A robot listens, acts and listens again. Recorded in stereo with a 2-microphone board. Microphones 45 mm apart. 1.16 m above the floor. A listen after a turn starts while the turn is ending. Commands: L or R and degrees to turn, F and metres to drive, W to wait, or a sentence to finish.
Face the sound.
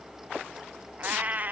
R40
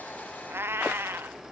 R95
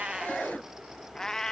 L15
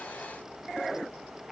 W
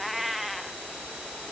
Facing the cat meowing.